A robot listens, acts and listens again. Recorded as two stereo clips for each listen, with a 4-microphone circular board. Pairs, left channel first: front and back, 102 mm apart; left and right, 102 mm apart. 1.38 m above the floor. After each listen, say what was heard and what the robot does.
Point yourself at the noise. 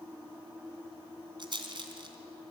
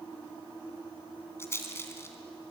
The rattle: 150° left. Turn 150° left.
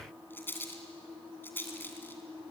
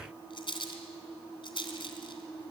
The rattle is now 65° left. Turn 65° left.
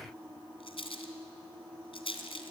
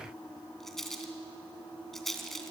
Facing the rattle, 2 to 4 m away.